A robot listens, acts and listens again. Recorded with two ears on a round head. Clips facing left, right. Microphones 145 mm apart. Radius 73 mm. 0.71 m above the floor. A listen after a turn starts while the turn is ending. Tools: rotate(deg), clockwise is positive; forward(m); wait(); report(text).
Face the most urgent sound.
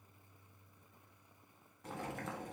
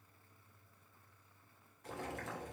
wait()
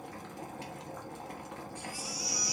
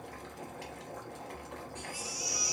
rotate(20)
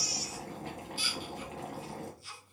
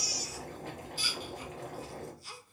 rotate(145)
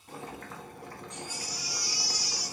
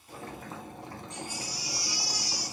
rotate(45)
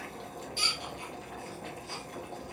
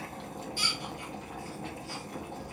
rotate(-20)
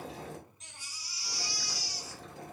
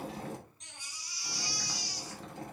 report("Facing the baby crying, 1 to 2 m away.")